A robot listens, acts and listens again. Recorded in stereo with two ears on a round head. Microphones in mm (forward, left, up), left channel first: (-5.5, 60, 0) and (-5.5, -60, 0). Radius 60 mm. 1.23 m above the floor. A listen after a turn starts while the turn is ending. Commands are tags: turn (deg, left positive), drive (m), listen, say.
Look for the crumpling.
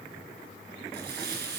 <turn deg="-90"/>
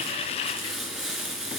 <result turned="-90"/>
<say>Facing the crumpling, 2 to 4 m away.</say>